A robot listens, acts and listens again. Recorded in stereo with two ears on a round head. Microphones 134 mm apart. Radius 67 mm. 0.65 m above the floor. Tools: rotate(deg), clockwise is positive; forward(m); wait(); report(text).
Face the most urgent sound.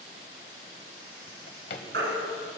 rotate(90)
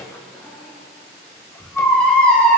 report("Found it: a baby crying, straight ahead, 2 to 4 m away.")